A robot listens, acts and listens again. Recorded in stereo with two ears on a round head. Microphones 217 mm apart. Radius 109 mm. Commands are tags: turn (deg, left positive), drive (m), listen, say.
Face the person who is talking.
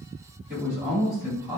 <turn deg="-30"/>
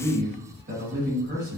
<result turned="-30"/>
<turn deg="-135"/>
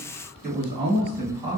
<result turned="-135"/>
<turn deg="-30"/>
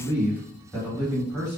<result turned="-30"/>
<say>Found it: a man speaking, straight ahead.</say>